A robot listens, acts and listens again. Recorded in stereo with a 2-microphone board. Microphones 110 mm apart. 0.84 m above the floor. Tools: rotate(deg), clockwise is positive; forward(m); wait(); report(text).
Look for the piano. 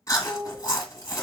rotate(55)
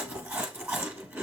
wait()
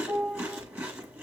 report("Facing the piano, 2 to 4 m away.")